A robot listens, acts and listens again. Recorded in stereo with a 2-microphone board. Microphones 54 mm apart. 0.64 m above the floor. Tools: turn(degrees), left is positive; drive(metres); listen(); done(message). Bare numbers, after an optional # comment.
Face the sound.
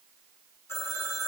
# The phone ringing: about 55° left or 125° left.
turn(55)
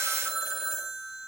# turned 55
done("Facing the phone ringing.")